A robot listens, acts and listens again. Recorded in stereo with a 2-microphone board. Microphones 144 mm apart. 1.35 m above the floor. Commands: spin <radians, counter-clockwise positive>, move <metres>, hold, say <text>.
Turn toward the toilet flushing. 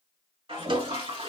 spin -0.70
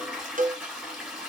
say Facing the toilet flushing.